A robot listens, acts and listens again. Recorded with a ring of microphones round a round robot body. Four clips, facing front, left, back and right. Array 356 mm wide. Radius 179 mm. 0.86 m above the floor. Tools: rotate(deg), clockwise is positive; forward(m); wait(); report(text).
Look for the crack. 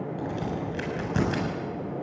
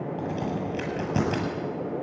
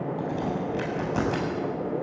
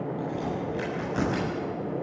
rotate(-60)
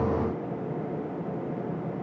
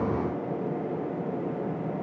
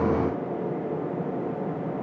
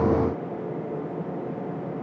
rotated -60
report("Facing where the crack came from. I can't hear it now.")